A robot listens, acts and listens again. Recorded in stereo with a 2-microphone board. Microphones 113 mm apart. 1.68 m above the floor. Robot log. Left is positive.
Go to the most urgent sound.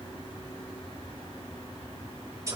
cmd idle
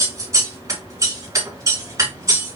cmd idle
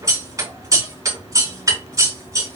end: I can't make out anything urgent, only scissors.